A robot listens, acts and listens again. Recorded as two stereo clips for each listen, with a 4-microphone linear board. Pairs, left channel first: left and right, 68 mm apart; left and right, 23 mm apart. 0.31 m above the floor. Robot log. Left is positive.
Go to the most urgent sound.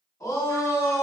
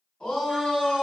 note: The shout: about 50° left or 130° left.
cmd yaw +50
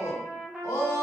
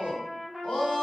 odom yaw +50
note: So it is at 70° left.
cmd yaw +70
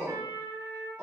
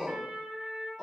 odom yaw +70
note: The shout is now 10° right.
cmd yaw -10
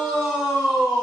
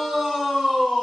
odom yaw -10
cmd fwd 1.0
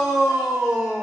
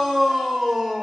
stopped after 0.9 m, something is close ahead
note: The shout is now 15° right.
cmd yaw -15
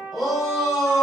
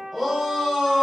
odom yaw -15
end: Arrived at the shout, straight ahead.